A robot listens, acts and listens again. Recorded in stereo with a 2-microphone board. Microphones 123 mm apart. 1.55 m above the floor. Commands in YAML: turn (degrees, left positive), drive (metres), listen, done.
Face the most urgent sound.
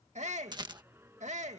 turn: -70
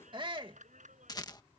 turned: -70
turn: -40
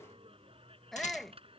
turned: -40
done: "Found it: a shout, straight ahead."